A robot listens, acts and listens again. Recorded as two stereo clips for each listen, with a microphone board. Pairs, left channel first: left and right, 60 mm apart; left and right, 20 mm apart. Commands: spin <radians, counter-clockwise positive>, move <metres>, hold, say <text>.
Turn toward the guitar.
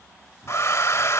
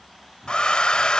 hold
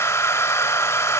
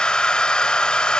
hold
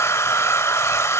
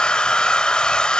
say I can't make out a guitar, only a hair dryer.